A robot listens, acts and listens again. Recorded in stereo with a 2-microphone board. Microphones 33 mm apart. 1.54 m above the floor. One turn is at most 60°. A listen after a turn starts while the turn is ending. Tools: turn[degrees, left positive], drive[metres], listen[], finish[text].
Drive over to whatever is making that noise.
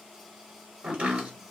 Thought: The chopping: about 45° right or 135° right.
Action: turn[-45]
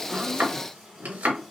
Thought: So it is at 90° right.
Action: turn[-60]
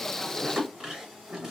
Thought: The chopping is now 25° right.
Action: turn[-25]
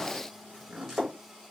Thought: The chopping is now 10° right.
Action: turn[-10]
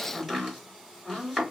Action: drive[1.0]
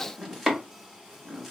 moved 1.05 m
Thought: The chopping is now 15° right.
Action: turn[-15]
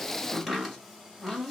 Action: drive[1.0]
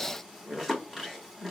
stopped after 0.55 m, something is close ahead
Action: finish[I am next to the chopping.]